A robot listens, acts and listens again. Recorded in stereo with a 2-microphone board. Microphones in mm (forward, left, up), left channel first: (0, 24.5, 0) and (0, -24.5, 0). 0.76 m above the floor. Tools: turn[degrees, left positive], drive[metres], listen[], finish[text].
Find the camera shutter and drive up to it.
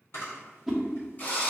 Thought: The camera shutter: about 60° left or 120° left.
Action: turn[60]
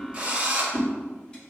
Action: listen[]
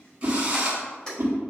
Thought: So it is at 15° left.
Action: turn[15]
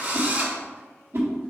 Action: listen[]
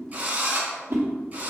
Action: listen[]
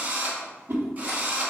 Action: finish[Facing where the camera shutter came from. I can't hear it now. I did not reach it.]